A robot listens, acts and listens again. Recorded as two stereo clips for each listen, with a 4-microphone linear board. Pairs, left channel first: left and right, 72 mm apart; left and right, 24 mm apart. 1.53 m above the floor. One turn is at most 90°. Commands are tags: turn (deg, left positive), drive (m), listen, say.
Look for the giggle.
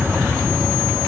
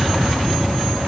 <listen/>
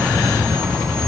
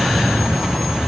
<listen/>
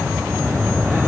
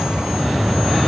<say>I can't make out a giggle to turn to.</say>